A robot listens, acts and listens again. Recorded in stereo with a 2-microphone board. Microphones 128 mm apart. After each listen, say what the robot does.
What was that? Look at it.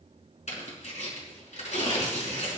Turn 90° left.
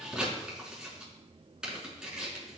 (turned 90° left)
Turn 10° right.
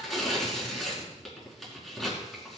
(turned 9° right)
Facing the tearing paper, over 4 m away.